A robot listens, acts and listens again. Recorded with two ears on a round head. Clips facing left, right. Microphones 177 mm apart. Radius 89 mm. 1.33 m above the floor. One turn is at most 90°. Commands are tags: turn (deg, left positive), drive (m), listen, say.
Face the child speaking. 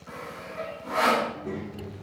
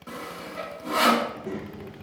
<turn deg="-30"/>
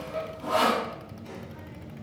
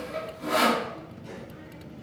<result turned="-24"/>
<turn deg="-30"/>
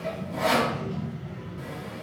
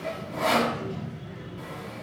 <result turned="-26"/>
<turn deg="-30"/>
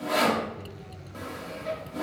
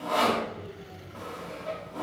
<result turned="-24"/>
<turn deg="-90"/>
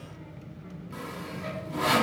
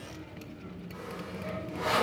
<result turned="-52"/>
<turn deg="-90"/>
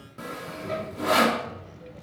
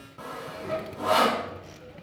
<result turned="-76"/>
<turn deg="-20"/>
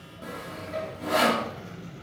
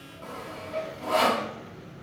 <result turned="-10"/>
<turn deg="-10"/>
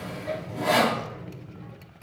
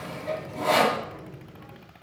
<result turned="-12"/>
<say>Found it: a child speaking, straight ahead.</say>